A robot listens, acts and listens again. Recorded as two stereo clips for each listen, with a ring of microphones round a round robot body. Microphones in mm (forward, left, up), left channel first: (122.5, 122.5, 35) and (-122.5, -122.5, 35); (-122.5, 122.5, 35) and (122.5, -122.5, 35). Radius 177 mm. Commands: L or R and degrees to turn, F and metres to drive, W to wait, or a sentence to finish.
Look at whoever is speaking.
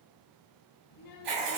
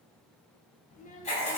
L70
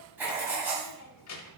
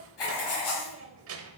Facing the child speaking.